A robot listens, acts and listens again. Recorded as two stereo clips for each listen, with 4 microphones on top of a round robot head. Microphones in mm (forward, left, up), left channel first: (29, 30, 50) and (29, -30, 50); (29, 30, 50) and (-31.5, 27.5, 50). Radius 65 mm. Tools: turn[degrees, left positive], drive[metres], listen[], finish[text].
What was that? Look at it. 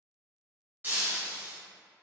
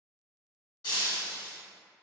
Thought: The breaking glass: 30° right.
Action: turn[-30]
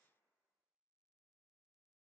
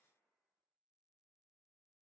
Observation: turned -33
Action: finish[Facing where the breaking glass came from. I can't hear it now.]